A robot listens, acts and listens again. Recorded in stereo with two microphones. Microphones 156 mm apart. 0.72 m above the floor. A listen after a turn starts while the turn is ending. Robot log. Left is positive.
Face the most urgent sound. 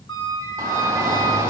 note: The shout: about 20° right or 160° right.
cmd yaw -20
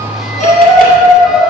end: Found it: a shout, straight ahead, 1 to 2 m away.